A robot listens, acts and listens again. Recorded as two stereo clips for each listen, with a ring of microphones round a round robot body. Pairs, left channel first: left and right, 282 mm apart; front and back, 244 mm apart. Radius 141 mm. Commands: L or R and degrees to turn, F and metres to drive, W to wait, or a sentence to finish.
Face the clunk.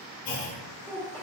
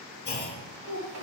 L50
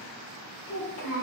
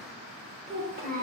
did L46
Facing where the clunk came from. I can't hear it now.